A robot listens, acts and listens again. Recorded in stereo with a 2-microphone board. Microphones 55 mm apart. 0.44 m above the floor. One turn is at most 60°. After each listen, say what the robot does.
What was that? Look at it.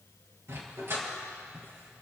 Turn 50° right.
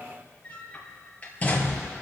Turn 30° left.
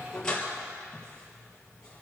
Turn 15° left.
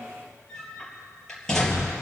Turn 10° left.
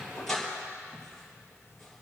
Found it: a dog barking, straight ahead, 2 to 4 m away.